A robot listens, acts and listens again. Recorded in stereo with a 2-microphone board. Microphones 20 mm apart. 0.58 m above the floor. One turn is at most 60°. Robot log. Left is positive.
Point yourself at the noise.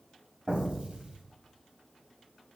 cmd yaw -60
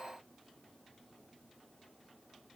note: Nothing new. It was at 30° right.
cmd yaw -30
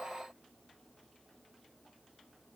end: I heard an explosion from this way, but can't make it out now.